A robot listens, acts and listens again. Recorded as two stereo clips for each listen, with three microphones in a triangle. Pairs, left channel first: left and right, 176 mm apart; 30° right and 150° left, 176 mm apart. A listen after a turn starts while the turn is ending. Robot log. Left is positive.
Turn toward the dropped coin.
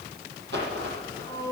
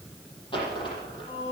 note: The dropped coin: 95° right.
cmd yaw -95
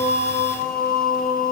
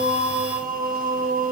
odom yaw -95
end: I heard a dropped coin from this way, but can't make it out now.